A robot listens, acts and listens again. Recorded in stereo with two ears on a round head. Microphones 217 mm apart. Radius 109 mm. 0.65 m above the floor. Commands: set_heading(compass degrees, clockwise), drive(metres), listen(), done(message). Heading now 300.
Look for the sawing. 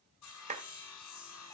set_heading(210)
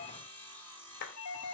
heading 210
set_heading(200)
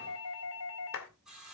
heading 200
done("Found it: sawing, straight ahead, over 4 m away.")